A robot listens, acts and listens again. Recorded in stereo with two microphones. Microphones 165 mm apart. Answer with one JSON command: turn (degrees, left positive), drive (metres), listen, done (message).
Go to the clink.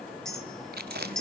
{"turn": 30}
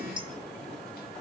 {"turn": -30}
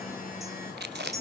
{"turn": -20}
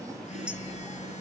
{"listen": true}
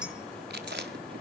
{"listen": true}
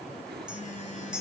{"drive": 1.0}
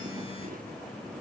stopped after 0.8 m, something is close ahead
{"listen": true}
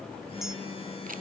{"listen": true}
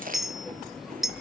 {"done": "I am next to the clink."}